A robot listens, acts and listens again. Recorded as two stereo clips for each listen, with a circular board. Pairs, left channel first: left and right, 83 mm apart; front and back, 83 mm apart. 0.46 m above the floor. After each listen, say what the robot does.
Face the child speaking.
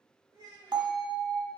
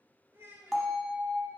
Turn 120° right.
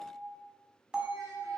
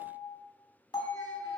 Keep listening.
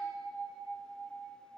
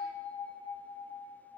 Keep listening.
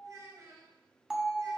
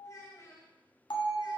Turn 45° right.
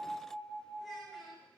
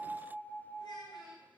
Keep listening.
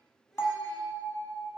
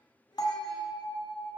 Keep listening.
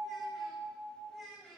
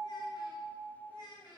Facing the child speaking.